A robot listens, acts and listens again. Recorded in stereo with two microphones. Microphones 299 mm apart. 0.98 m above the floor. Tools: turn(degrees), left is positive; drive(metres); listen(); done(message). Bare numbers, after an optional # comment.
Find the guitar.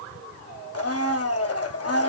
listen()
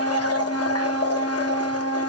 listen()
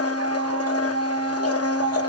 done("I can't make out a guitar, only a blender.")